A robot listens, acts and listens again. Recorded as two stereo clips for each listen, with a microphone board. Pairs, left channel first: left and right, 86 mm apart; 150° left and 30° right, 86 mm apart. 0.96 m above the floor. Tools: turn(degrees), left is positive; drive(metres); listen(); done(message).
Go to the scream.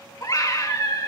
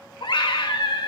turn(degrees=135)
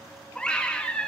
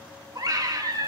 turn(degrees=10)
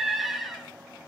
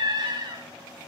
drive(metres=1.0)
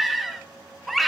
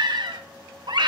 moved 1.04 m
drive(metres=1.0)
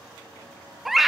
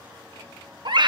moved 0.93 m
drive(metres=1.0)
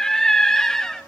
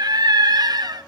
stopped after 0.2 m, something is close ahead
done("I am next to the scream.")